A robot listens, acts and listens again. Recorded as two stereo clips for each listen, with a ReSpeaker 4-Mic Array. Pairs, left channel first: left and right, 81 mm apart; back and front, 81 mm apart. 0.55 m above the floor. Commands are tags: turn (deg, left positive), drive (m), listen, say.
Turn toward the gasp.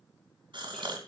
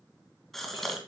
<turn deg="-95"/>
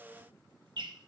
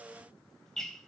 <say>I heard a gasp from this way, but can't make it out now.</say>